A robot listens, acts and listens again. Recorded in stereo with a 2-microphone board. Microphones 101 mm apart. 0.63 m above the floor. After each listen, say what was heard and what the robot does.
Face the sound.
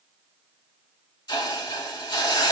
The hiss: about 40° left or 140° left. Turn 40° left.
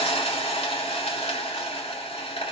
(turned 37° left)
So it is at 100° left. Turn 100° left.
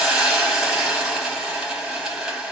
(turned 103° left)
Found it: a hiss, straight ahead.